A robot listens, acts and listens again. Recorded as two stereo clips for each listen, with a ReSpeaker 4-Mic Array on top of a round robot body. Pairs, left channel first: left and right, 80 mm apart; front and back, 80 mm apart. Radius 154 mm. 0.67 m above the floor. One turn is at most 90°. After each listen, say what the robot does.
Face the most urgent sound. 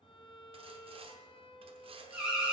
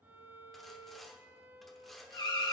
Turn 10° right.
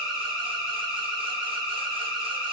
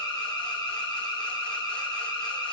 Facing the alarm, 2 to 4 m away.